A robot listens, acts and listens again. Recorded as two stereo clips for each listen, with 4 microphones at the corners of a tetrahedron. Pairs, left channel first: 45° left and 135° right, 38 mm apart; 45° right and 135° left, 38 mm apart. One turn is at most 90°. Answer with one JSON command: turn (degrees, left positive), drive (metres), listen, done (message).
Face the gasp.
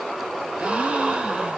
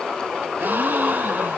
{"turn": 90}
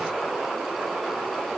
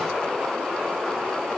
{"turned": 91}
{"turn": 70}
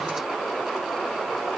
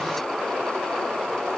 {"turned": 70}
{"done": "Facing where the gasp came from. I can't hear it now."}